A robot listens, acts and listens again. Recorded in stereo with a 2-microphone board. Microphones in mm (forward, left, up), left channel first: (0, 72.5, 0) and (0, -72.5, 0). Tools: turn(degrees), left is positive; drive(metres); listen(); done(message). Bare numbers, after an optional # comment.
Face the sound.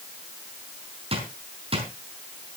# The drawer: about 40° right or 140° right.
turn(-40)
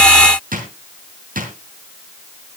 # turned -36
# So it is at 105° right.
turn(-105)
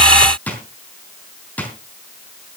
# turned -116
# The drawer is now 10° left.
turn(10)
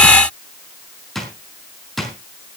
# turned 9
done("Facing the drawer.")